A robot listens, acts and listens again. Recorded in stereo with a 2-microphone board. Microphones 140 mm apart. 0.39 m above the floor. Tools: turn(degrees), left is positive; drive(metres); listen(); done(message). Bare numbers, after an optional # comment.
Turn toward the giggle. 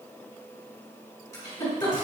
# The giggle: about 25° left or 155° left.
turn(25)
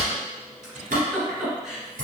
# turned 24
done("Found it: a giggle, straight ahead, 1 to 2 m away.")